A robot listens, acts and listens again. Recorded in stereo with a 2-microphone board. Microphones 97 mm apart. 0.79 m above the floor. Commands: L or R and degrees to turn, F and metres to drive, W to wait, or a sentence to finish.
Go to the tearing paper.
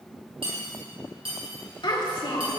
W
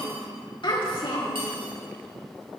W
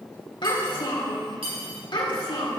I can't make out tearing paper, only cutlery clinking and a child speaking.